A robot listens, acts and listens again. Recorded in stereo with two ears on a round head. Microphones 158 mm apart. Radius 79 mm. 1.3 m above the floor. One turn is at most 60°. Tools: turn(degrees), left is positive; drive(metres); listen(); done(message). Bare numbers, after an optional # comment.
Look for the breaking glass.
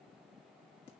listen()
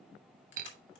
# The breaking glass: about 50° right or 130° right.
turn(-50)
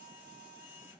listen()
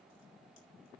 done("I heard breaking glass, but can't make it out now. It was about straight ahead or 80° right.")